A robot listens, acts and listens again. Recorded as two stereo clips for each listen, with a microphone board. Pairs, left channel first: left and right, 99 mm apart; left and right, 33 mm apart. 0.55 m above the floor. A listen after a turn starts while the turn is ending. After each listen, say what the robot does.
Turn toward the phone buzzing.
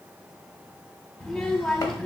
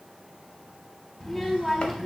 Keep listening.
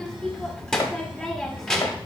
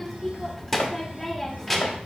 Keep listening.
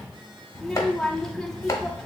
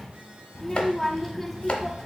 I can't make out a phone buzzing to turn to.